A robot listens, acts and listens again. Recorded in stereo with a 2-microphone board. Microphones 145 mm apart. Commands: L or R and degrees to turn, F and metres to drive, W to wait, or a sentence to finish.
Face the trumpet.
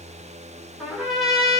L30
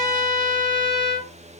L155
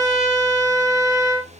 Facing the trumpet.